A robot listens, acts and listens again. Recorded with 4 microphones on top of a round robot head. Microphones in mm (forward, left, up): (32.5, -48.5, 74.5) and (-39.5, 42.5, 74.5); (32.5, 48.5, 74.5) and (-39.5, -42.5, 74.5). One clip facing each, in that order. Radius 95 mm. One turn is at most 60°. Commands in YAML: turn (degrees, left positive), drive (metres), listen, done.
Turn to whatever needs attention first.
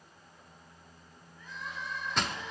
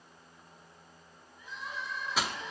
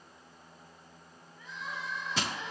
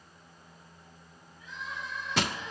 turn: 55
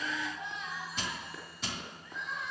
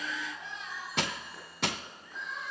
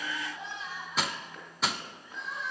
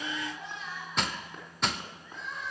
turn: -20
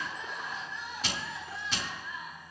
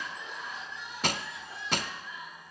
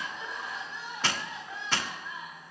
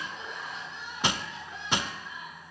done: "Facing the crying."